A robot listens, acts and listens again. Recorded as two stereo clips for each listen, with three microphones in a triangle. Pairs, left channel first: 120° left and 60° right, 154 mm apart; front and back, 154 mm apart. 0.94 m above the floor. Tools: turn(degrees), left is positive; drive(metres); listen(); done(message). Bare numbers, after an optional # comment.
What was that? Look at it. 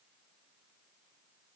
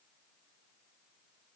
listen()
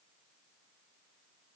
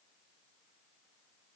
listen()
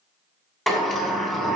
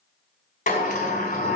# The sliding door: 35° left.
turn(35)
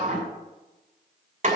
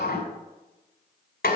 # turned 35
# The sliding door is now 15° right.
turn(-15)
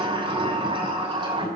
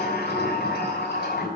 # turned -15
done("Found it: a sliding door, straight ahead.")